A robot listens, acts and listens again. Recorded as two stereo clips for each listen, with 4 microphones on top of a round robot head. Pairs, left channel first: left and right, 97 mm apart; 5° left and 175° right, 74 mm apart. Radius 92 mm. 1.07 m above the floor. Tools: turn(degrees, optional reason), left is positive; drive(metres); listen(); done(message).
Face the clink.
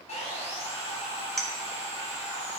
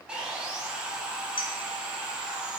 done("Facing the clink.")